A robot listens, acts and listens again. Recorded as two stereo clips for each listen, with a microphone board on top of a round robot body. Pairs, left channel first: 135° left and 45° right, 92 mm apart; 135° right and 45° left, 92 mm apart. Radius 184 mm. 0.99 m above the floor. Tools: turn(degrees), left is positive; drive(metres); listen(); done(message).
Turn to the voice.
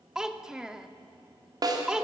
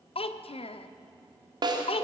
turn(degrees=-130)
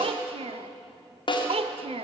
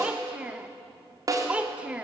turn(degrees=-35)
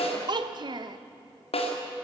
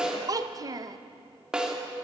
done("Found it: a child speaking, straight ahead, 1 to 2 m away.")